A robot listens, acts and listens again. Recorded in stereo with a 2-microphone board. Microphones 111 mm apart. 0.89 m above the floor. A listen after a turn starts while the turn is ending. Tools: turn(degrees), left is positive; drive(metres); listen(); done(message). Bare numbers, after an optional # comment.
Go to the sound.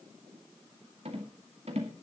# The rattle: about 65° right or 115° right.
turn(-65)
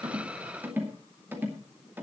# So it is at 20° right.
turn(-20)
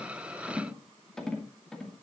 drive(1.0)
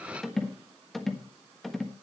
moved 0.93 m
drive(1.0)
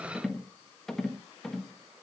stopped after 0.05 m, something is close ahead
done("I am next to the rattle.")